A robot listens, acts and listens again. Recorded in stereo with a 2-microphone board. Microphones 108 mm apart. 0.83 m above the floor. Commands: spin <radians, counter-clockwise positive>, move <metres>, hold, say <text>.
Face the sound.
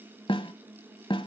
spin 0.87
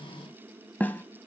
spin 0.35
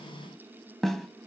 say Found it: a snare drum, straight ahead, 1 to 2 m away.